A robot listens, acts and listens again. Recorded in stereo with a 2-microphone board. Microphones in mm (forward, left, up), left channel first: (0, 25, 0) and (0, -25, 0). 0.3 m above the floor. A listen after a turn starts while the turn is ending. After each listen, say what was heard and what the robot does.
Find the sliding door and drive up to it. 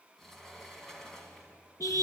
Turn 30° left.
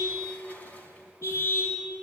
So it is at 145° left. Turn 145° left.
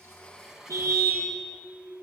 The sliding door is now 10° right. Turn 10° right.
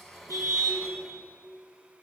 Drive 1.0 m forward.
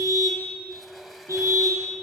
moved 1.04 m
Keep listening.
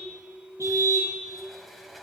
Drive 1.0 m forward.
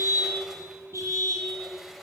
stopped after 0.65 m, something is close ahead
Arrived at the sliding door, straight ahead.